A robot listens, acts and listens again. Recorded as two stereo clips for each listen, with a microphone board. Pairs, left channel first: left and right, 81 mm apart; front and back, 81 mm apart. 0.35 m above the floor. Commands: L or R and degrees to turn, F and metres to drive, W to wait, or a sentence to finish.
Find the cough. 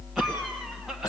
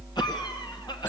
Facing the cough.